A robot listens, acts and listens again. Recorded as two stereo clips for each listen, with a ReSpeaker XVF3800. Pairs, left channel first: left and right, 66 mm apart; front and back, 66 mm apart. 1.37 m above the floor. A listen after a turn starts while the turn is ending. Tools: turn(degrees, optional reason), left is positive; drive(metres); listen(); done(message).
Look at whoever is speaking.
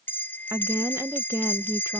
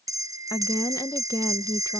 turn(degrees=-35, reason="The woman speaking: 35° right.")
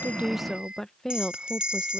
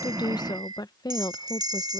turn(degrees=10, reason="The woman speaking is now 10° left.")
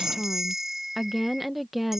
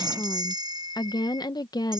done("Facing the woman speaking.")